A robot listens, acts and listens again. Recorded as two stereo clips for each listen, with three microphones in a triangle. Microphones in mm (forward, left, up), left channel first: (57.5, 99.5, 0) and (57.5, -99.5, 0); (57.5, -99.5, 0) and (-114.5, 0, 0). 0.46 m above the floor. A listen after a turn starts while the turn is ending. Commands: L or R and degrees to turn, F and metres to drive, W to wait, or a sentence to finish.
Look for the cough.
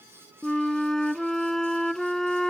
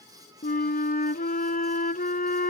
W
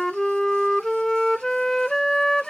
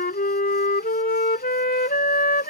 W
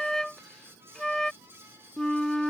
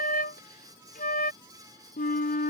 I can't make out a cough to turn to.